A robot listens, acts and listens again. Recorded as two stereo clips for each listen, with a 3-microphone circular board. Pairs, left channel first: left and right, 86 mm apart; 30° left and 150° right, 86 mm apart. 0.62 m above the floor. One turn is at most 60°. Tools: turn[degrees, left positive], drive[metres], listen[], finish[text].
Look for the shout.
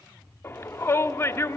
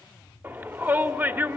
Thought: The shout: 150° left.
Action: turn[60]
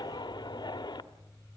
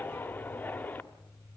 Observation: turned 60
Thought: The shout is now 95° left.
Action: turn[60]
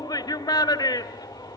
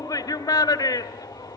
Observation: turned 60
Thought: The shout is now 65° left.
Action: turn[60]
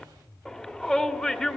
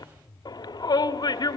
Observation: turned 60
Thought: The shout is now 10° left.
Action: turn[10]
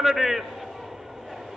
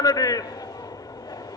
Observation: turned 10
Action: finish[Found it: a shout, straight ahead, 1 to 2 m away.]